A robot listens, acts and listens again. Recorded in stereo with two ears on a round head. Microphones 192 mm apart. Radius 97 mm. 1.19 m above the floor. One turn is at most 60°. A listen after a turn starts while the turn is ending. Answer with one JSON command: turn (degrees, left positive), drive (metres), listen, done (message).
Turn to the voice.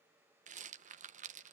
{"listen": true}
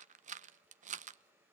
{"listen": true}
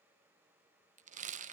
{"done": "I can't make out anyone speaking to turn to."}